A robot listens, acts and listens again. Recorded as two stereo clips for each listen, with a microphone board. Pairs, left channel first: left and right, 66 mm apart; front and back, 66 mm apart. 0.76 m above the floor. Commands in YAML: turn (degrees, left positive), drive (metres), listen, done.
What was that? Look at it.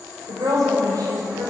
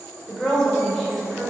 turn: -80
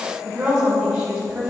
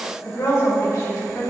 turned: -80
turn: -15
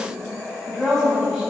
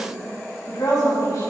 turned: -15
done: "Facing the woman speaking."